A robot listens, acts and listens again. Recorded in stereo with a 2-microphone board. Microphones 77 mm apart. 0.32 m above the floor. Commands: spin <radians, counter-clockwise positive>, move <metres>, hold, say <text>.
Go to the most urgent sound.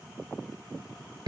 hold
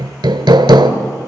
hold
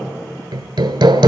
say I can't make out anything urgent, only hammering.